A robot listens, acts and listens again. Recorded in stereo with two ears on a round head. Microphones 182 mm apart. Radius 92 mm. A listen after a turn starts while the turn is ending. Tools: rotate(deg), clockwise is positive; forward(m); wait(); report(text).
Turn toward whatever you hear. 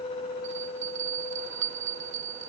rotate(65)
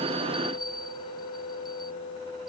wait()
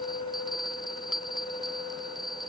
report("Found it: a bell, straight ahead.")